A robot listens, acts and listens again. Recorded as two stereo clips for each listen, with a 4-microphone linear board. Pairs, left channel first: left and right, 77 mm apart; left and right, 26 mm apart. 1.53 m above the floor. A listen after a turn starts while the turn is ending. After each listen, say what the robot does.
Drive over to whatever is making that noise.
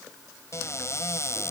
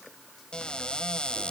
Turn 40° left.
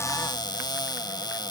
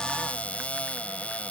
Turn 100° left.
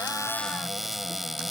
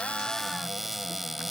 Drive 1.0 m forward.
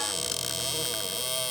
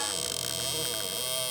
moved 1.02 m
Drive 1.0 m forward.
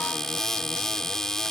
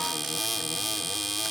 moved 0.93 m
Turn 10° left.
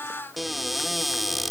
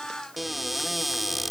Drive 1.0 m forward.
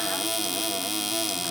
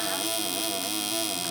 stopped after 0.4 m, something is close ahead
Arrived at the cupboard door, straight ahead.